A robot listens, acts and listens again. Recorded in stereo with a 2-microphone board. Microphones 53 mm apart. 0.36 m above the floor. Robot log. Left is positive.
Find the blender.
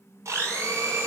note: The blender: about 65° right or 115° right.
cmd yaw -65
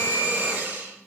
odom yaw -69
note: So it is at 45° right.
cmd yaw -45
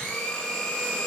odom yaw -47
end: Facing the blender.